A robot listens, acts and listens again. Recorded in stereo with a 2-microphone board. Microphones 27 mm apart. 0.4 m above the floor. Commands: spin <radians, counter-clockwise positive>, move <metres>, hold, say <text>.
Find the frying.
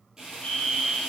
spin -0.35
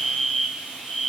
spin -2.44
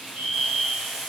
say Facing the frying, 2 to 4 m away.